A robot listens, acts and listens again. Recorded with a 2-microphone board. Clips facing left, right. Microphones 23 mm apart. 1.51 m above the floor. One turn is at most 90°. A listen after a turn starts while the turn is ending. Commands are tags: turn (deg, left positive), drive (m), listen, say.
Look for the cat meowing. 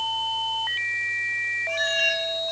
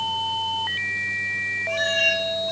<turn deg="30"/>
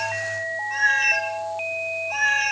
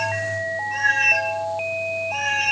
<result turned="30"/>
<turn deg="90"/>
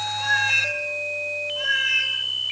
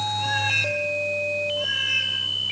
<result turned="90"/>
<turn deg="70"/>
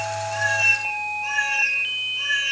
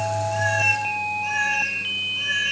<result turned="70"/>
<say>Found it: a cat meowing, straight ahead.</say>